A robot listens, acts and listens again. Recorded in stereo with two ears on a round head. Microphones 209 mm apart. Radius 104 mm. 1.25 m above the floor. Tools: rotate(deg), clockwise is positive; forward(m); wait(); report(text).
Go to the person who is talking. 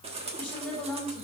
rotate(-30)
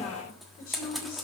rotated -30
rotate(-140)
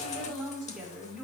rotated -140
forward(1.0)
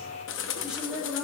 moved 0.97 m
forward(1.0)
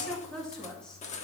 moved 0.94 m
forward(1.0)
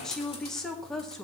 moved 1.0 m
forward(1.0)
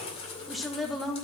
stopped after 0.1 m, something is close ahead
report("Arrived at the woman speaking, straight ahead.")